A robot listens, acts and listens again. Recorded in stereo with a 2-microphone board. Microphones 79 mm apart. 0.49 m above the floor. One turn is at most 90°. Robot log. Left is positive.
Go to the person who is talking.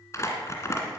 cmd idle
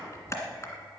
cmd idle
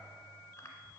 end: I can't make out anyone speaking, only crumpling.